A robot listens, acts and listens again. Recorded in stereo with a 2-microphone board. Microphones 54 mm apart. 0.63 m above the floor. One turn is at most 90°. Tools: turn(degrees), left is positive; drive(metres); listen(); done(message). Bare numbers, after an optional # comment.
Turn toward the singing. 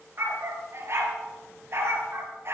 listen()
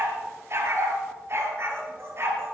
listen()
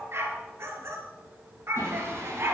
# The singing: about 55° right or 125° right.
turn(-55)
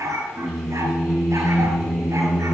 done("Facing the singing.")